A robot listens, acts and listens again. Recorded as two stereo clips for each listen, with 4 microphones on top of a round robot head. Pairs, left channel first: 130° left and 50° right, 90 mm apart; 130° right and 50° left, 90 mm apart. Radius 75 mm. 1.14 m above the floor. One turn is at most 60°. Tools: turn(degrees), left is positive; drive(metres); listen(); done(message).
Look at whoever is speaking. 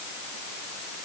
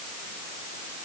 listen()
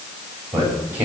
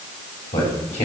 turn(degrees=-60)
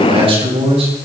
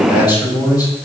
turn(degrees=-60)
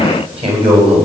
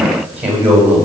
turn(degrees=-25)
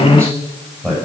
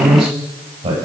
turn(degrees=10)
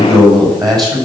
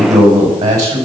done("Facing the man speaking.")